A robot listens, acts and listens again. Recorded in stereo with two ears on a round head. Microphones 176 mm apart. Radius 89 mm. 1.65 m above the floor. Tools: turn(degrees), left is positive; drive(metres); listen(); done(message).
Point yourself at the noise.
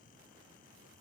listen()
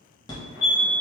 turn(degrees=20)
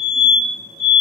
done("Found it: a fire alarm, straight ahead, 1 to 2 m away.")